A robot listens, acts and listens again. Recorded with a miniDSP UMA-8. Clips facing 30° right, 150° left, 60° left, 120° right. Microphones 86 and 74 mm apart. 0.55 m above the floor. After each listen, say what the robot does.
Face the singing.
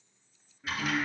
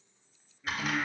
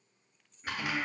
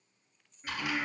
Turn 40° right.
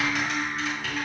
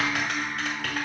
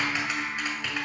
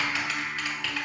Turn 10° right.
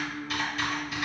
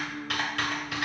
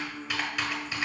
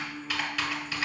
Facing the singing, 1 to 2 m away.